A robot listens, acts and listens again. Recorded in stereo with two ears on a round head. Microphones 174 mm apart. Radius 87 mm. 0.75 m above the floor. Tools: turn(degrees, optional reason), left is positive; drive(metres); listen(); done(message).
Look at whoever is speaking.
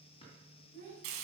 turn(degrees=-40, reason="The child speaking: about 40° right or 140° right.")
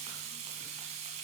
listen()
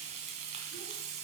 listen()
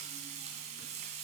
done("I heard a child speaking, but can't make it out now. It was about straight ahead or 100° right.")